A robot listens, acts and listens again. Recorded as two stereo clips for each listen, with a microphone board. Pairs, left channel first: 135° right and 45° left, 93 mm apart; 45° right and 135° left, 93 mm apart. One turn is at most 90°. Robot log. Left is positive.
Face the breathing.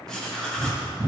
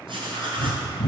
note: The breathing: 15° right.
cmd yaw -15
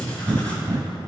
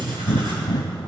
note: The breathing is now 10° right.
cmd yaw -10
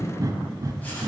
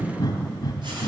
end: Found it: breathing, straight ahead, under 1 m away.